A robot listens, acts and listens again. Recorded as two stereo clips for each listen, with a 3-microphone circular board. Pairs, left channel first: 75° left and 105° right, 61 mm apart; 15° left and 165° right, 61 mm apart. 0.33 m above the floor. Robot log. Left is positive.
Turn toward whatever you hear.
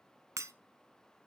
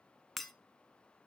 note: The breaking glass: 75° right.
cmd yaw -75
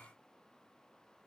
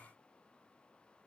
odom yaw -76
end: Facing where the breaking glass came from. I can't hear it now.